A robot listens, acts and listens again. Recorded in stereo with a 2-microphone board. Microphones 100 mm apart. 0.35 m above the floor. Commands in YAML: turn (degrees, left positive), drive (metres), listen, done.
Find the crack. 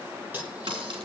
turn: -65
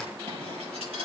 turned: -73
listen: true
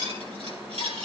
done: "I heard a crack, but can't make it out now. It was about 10° left or 45° right."